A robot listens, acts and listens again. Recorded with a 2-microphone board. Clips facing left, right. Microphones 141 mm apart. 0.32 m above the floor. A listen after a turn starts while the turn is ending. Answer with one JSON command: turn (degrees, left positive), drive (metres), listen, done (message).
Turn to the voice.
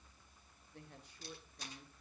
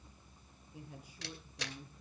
{"turn": -30}
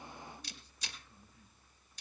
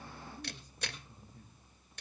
{"turn": -135}
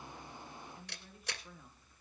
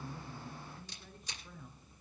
{"done": "Facing the woman speaking, over 4 m away."}